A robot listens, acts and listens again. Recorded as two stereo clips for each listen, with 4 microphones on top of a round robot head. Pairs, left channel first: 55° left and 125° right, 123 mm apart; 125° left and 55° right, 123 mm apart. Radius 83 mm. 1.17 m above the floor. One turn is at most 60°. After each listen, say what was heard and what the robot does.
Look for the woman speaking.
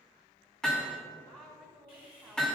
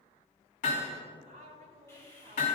The woman speaking: 30° right. Turn 30° right.
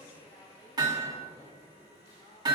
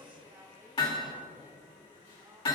Keep listening.
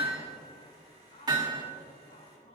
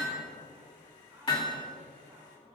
The woman speaking is now 20° left. Turn 20° left.
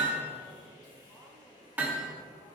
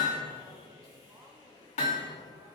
Keep listening.
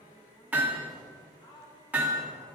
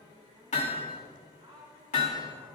Found it: a woman speaking, straight ahead, over 4 m away.